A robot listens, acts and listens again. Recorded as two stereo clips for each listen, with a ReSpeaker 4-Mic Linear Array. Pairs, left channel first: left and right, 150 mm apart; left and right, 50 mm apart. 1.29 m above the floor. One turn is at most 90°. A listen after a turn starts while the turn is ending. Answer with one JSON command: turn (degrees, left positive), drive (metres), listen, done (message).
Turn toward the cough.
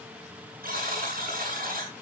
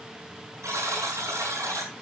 {"listen": true}
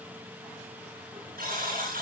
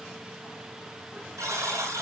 {"listen": true}
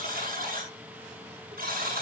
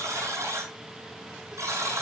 {"done": "I can't make out a cough, only a buzzer."}